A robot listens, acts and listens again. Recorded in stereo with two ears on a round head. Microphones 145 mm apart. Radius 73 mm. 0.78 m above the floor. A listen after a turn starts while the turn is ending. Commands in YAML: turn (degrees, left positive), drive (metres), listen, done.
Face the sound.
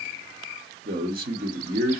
turn: -60
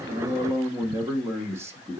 turn: -20
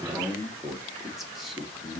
done: "Facing the man speaking, under 1 m away."